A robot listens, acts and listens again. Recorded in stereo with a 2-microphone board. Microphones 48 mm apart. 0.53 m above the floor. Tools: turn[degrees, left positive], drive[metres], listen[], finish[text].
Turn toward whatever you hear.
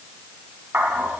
Thought: The dog barking: about 45° right or 135° right.
Action: turn[-45]
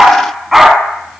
Action: finish[Facing the dog barking.]